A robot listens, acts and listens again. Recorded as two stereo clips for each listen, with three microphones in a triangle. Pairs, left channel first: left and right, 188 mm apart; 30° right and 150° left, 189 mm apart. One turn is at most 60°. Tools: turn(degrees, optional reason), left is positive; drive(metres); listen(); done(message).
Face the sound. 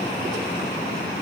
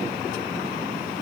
listen()
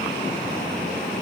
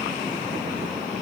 listen()
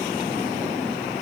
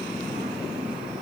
done("I can't make out anything.")